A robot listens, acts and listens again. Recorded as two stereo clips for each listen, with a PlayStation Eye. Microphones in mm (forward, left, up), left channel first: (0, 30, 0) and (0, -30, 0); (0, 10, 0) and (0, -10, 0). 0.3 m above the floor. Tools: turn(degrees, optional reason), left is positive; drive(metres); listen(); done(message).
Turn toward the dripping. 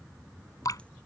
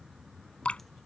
turn(degrees=65, reason="The dripping: about 65° left or 115° left.")
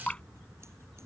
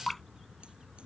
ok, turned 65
turn(degrees=20, reason="So it is at 20° left.")
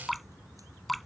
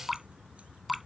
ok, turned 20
done("Facing the dripping.")